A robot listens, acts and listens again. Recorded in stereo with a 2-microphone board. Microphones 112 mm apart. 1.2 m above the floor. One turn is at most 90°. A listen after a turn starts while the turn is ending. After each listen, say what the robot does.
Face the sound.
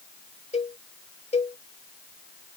Turn 75° left.
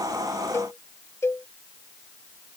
Turn 25° left.
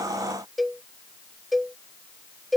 Facing the cowbell.